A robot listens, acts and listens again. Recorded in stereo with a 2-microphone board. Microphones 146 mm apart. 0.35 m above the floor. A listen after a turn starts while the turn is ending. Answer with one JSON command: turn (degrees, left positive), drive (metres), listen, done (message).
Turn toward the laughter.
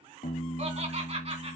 {"turn": -45}
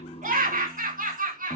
{"turn": -110}
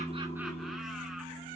{"listen": true}
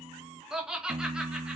{"done": "Facing the laughter, 2 to 4 m away."}